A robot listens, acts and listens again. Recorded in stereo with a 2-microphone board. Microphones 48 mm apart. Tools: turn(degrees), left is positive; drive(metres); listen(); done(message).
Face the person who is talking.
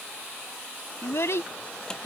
turn(degrees=90)
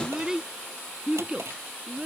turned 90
turn(degrees=-25)
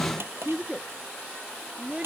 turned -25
turn(degrees=-25)
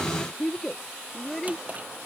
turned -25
done("Found it: a child speaking, straight ahead.")